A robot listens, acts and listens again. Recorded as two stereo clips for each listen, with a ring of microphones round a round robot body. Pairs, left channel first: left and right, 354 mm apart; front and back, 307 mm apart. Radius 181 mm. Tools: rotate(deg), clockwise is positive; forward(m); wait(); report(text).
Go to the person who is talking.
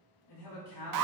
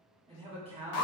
rotate(-110)
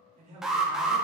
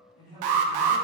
rotate(20)
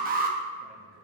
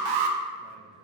wait()
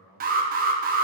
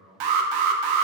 forward(1.0)
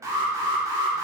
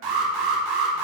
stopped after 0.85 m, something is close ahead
wait()
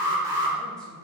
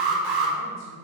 wait()
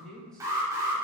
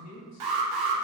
report("I am next to the man speaking.")